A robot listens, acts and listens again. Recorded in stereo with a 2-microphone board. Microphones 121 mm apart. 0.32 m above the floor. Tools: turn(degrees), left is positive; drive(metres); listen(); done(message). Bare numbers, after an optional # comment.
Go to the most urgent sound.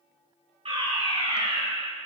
# The fire alarm: about 50° right or 130° right.
turn(-50)
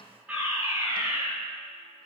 # So it is at 10° right.
turn(-10)
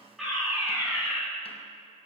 drive(1.0)
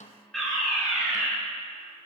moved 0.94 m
drive(1.0)
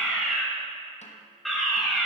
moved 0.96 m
drive(1.0)
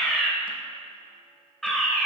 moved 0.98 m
drive(1.0)
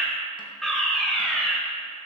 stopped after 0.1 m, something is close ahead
done("Arrived at the fire alarm, straight ahead.")